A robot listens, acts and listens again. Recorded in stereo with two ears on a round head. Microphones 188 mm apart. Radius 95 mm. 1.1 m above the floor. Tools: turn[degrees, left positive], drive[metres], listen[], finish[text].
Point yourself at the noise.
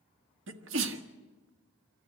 Thought: The sneeze: about 60° right or 120° right.
Action: turn[-60]
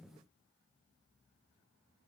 Action: listen[]
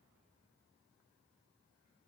Action: finish[I heard a sneeze, but can't make it out now. It was about straight ahead or 60° right.]